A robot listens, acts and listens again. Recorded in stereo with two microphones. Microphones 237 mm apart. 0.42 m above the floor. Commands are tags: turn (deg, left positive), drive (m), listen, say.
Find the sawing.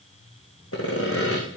<turn deg="70"/>
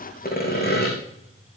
<turn deg="40"/>
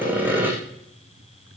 <turn deg="-10"/>
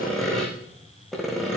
<say>Found it: sawing, straight ahead, over 4 m away.</say>